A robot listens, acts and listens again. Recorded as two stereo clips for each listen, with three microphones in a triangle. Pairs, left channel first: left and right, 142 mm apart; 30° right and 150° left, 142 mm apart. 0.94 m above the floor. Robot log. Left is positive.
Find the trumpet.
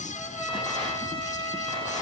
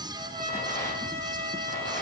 note: The trumpet: 145° left.
cmd yaw +145
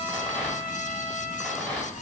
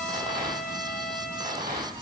note: The trumpet is now 10° right.
cmd yaw -10
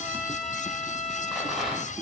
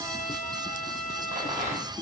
end: Facing the trumpet.